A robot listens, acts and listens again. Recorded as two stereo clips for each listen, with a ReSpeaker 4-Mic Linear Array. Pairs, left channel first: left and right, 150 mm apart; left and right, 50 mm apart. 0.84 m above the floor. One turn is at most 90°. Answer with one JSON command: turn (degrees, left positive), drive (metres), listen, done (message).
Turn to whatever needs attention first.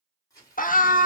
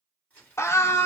{"turn": 65}
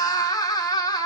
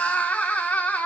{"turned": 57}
{"turn": 30}
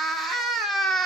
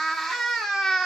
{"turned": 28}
{"done": "Found it: a scream, straight ahead, under 1 m away."}